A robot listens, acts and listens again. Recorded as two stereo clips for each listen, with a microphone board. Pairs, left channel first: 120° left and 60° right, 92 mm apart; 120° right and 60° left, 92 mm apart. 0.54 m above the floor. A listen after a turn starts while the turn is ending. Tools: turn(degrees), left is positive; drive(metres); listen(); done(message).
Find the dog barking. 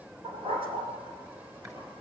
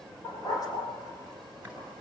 turn(degrees=-70)
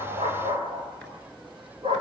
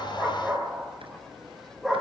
turn(degrees=-30)
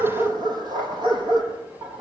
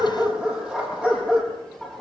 turn(degrees=-25)
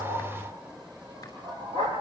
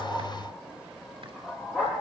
turn(degrees=-20)
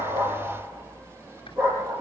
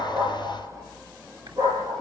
done("Found it: a dog barking, straight ahead, over 4 m away.")